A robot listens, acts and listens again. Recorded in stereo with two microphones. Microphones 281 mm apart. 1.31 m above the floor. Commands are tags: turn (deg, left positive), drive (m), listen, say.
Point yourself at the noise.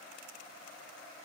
<listen/>
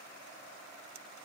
<listen/>
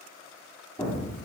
<turn deg="30"/>
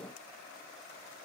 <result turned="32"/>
<listen/>
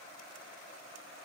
<say>I heard an explosion, but can't make it out now. It was about 20° right or 135° left.</say>